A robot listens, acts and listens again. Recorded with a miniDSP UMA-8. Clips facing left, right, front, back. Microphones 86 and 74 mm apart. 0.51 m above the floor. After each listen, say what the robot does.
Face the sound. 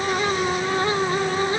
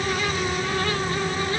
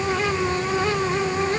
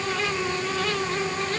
Keep listening.
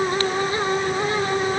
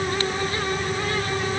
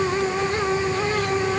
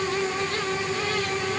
Keep listening.
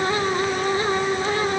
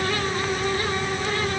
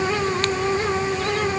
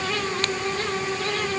I can't make out anything to turn to.